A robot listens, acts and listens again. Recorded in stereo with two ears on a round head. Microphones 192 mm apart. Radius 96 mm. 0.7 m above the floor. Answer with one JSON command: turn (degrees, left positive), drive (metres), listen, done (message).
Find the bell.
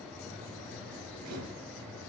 {"listen": true}
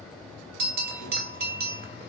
{"turn": -45}
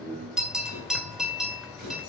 {"done": "Facing the bell, 1 to 2 m away."}